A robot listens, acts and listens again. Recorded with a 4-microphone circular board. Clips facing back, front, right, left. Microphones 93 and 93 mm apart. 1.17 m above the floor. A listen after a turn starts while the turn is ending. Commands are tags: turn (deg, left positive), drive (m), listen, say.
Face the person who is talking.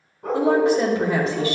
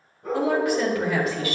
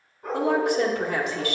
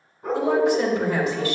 <turn deg="-115"/>
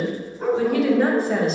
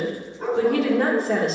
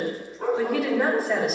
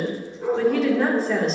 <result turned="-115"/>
<say>Facing the woman speaking.</say>